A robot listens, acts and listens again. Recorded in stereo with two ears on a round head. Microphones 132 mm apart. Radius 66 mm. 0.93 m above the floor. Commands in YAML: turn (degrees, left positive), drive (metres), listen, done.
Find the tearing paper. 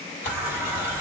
turn: 55
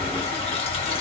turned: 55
listen: true
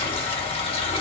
listen: true
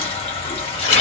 turn: 55
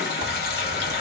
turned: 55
listen: true
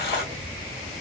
listen: true
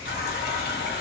done: "Facing where the tearing paper came from. I can't hear it now."